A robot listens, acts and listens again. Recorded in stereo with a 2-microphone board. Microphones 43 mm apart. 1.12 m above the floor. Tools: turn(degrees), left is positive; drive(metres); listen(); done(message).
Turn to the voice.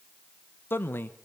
turn(degrees=55)
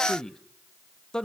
turn(degrees=15)
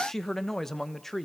done("Facing the man speaking, 1 to 2 m away.")